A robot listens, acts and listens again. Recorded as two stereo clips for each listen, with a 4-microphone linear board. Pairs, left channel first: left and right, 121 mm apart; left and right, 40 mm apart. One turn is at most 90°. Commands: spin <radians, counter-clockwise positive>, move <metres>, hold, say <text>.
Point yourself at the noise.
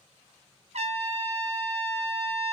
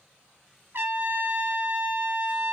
spin -1.13
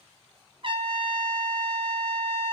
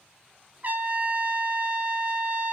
spin -0.79
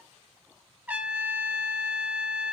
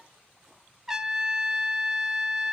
spin -0.26
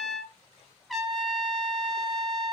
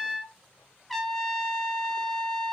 say Found it: a trumpet, straight ahead.